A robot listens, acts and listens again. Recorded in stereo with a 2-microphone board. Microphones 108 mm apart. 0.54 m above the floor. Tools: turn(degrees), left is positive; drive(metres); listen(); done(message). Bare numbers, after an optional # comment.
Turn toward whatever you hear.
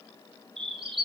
# The bird: about 55° right or 125° right.
turn(-55)
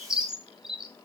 done("Found it: a bird, straight ahead.")